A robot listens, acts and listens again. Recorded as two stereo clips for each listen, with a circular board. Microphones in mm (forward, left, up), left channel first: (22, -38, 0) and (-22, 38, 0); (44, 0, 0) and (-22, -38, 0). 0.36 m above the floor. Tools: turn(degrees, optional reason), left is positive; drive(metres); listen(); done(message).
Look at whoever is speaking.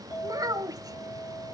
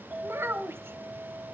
turn(degrees=160, reason="The child speaking: 160° left.")
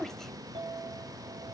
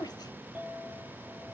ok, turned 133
turn(degrees=25, reason="The child speaking is now 25° left.")
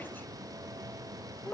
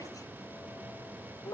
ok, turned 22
done("Found it: a child speaking, straight ahead, 1 to 2 m away.")